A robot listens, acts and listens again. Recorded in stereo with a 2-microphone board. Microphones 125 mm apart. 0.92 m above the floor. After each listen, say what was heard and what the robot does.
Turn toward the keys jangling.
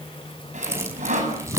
The keys jangling: about 20° right or 160° right. Turn 20° right.
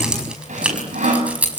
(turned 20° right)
Turn 30° right.
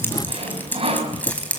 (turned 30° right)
So it is at 10° left. Turn 10° left.
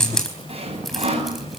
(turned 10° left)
Facing the keys jangling, over 4 m away.